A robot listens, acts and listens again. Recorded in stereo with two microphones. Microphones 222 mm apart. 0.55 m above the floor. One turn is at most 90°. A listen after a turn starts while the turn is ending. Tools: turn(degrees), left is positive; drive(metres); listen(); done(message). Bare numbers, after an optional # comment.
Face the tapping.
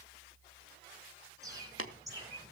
# The tapping: about 70° left or 110° left.
turn(70)
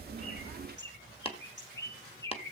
# So it is at 30° left.
turn(30)
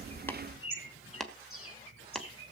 done("Found it: tapping, straight ahead, 1 to 2 m away.")